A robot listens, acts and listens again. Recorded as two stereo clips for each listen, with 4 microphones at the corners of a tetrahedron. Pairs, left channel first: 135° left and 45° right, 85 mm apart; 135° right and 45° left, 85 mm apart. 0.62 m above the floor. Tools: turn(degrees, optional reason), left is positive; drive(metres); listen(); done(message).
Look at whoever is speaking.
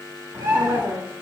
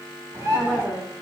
turn(degrees=-30, reason="The woman speaking: 30° right.")
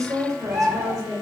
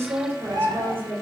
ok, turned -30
turn(degrees=-15, reason="The woman speaking is now 15° right.")
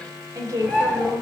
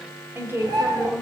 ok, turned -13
turn(degrees=-20, reason="The woman speaking is now 20° right.")
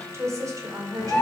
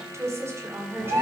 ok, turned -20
turn(degrees=-10, reason="The woman speaking is now 10° right.")
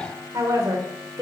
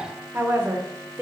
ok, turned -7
turn(degrees=-15, reason="The woman speaking is now 15° right.")
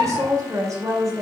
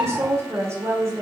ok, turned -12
done("Found it: a woman speaking, straight ahead.")